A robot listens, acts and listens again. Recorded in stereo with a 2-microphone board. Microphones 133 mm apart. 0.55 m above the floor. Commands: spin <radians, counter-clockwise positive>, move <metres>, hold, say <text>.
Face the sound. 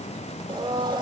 spin -0.52
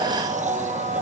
spin -2.09
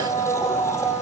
spin 0.35
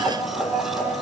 say Found it: a blender, straight ahead.